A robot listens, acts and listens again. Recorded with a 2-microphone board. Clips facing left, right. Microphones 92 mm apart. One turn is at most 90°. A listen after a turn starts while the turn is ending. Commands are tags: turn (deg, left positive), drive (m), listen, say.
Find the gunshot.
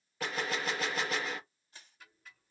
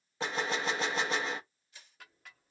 <turn deg="-25"/>
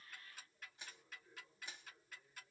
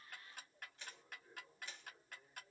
<listen/>
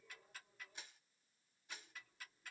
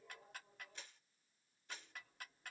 <say>I heard a gunshot, but can't make it out now. It was about straight ahead or 130° right.</say>